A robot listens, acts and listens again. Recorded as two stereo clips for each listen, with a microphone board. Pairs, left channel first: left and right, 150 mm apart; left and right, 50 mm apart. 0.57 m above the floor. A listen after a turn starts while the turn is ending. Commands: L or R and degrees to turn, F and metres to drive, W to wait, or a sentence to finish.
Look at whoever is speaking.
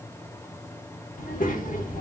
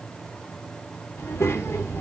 L60
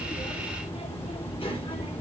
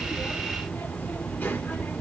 L40
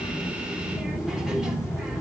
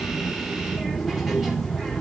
Facing the child speaking.